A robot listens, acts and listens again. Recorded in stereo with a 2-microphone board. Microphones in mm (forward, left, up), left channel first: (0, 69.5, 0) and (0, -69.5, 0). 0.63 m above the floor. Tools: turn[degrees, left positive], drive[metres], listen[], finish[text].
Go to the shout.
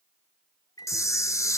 Action: listen[]
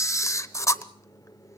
Action: listen[]
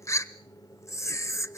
Action: finish[I can't make out a shout to turn to.]